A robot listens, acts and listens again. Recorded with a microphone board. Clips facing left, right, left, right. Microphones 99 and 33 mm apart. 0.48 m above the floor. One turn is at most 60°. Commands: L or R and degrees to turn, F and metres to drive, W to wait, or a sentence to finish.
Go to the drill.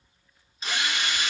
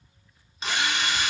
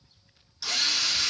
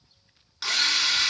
R60
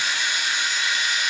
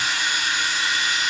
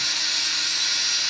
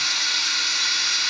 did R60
R40
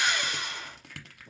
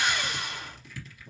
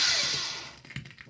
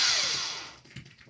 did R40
F1.0
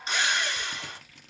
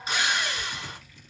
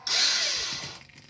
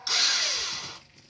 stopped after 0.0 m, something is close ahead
R10
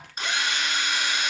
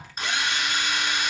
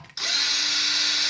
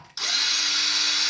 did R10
Blocked. The drill is further on, straight ahead.